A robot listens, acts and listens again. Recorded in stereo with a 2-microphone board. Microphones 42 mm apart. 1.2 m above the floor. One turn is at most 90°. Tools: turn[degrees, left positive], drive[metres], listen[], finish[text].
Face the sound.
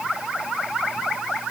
Action: listen[]
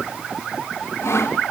Action: turn[90]
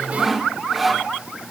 Action: finish[Found it: sawing, straight ahead, 2 to 4 m away.]